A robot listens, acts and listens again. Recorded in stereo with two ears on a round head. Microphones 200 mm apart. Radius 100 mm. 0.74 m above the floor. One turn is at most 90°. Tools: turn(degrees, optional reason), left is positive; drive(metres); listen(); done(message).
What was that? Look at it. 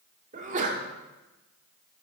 turn(degrees=-35, reason="The sneeze: about 35° right or 145° right.")
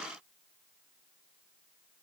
listen()
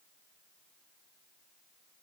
done("I heard a sneeze, but can't make it out now. It was about straight ahead or 110° right.")